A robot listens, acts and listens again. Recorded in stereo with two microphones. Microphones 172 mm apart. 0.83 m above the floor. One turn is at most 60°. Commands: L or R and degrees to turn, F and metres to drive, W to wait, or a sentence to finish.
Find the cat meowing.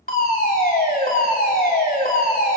W
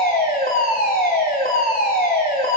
W
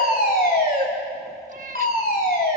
R50
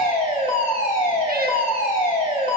W
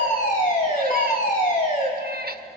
R60
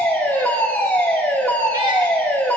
R15
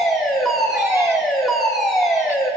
W
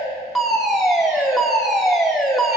Facing where the cat meowing came from. I can't hear it now.